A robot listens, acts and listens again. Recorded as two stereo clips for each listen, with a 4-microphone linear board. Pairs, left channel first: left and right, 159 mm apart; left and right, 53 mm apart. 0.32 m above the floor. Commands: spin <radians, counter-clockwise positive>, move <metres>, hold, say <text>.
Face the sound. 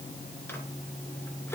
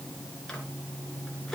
spin 0.52
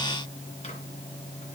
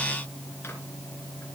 hold
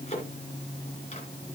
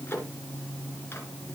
spin 2.44
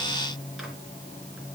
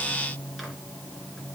hold
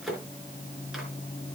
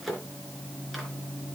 say Facing the microwave.